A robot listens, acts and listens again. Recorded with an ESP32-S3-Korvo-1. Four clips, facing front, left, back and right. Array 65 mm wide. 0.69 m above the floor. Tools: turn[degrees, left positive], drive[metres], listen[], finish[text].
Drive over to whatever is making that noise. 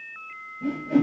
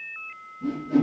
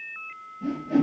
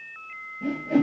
Thought: The whoosh: 70° right.
Action: turn[-70]
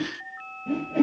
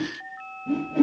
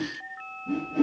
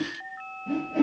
Action: drive[1.0]
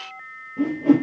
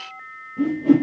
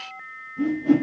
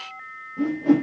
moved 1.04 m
Thought: The whoosh is now 15° right.
Action: turn[-15]
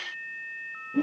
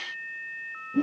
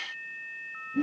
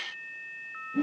Action: drive[1.0]
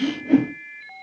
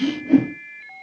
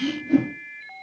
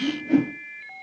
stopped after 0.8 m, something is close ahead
Action: finish[Arrived at the whoosh, straight ahead.]